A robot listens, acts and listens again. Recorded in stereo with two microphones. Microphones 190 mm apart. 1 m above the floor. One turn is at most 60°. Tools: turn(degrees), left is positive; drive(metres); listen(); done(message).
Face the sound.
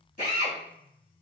turn(degrees=45)
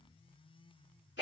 turn(degrees=60)
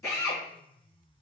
turn(degrees=15)
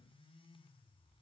listen()
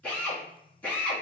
turn(degrees=10)
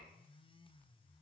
listen()
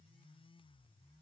listen()
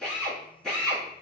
done("Found it: a drill, straight ahead.")